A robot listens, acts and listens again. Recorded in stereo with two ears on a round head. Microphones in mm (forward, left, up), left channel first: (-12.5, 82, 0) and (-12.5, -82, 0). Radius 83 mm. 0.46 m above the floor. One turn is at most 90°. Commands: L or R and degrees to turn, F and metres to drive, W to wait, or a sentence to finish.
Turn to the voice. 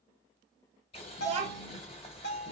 R35
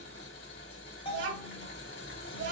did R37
R90
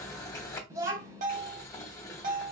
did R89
R15
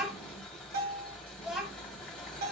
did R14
Facing the child speaking.